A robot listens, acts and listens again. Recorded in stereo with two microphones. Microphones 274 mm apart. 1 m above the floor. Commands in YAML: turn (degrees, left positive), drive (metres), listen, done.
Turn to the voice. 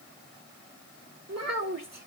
turn: -70
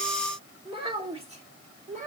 turn: -30
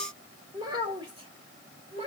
turn: -20
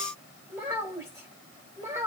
turn: -10
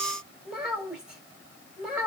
done: "Facing the child speaking."